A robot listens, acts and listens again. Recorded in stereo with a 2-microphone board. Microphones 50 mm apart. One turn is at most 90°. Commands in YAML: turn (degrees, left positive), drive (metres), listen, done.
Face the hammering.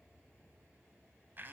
listen: true
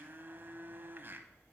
listen: true
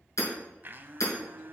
turn: 90
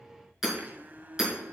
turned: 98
done: "Facing the hammering."